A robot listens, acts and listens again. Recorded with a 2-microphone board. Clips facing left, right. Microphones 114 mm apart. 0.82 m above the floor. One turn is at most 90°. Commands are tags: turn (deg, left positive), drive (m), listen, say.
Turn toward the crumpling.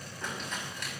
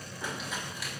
<turn deg="-30"/>
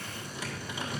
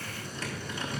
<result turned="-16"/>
<turn deg="10"/>
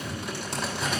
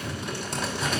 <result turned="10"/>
<say>Facing the crumpling.</say>